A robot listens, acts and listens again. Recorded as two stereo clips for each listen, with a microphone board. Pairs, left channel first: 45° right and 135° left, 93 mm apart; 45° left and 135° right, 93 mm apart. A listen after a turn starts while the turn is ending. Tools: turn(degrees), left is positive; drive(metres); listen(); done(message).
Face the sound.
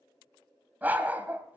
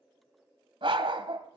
turn(degrees=-155)
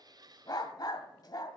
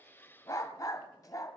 done("Facing the dog barking.")